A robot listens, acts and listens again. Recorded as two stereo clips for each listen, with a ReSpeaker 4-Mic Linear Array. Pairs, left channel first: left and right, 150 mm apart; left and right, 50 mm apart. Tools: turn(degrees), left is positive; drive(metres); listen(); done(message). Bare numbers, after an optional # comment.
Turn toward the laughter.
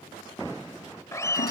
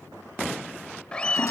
# The laughter: about 20° left or 160° left.
turn(20)
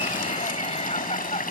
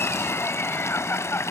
# So it is at 135° left.
turn(135)
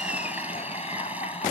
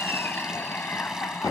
# The laughter is now 45° left.
turn(45)
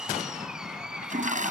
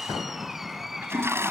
done("Facing the laughter.")